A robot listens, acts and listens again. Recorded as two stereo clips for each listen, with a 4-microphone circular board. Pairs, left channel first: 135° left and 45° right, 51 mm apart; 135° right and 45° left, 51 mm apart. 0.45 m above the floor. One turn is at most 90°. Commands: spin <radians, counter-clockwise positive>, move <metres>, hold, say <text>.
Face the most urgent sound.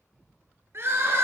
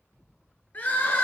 spin -1.40
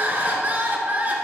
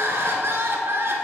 spin 0.17
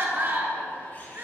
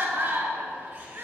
say Found it: crying, straight ahead, 1 to 2 m away.